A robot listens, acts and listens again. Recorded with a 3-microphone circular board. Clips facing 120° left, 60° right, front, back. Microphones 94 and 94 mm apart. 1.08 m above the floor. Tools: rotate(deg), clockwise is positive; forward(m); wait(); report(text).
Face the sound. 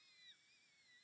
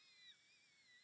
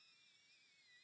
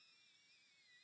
wait()
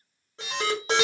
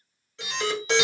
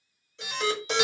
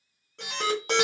rotate(-165)
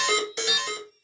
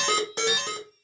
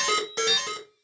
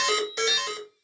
rotate(35)
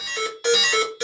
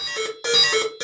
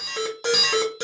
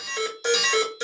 report("Found it: an alarm, straight ahead, 2 to 4 m away.")